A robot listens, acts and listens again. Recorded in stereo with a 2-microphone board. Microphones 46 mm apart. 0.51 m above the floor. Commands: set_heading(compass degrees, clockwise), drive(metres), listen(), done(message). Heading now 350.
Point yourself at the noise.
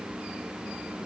listen()
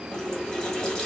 set_heading(320)
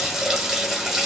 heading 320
set_heading(335)
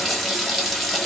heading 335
done("Found it: a running tap, straight ahead.")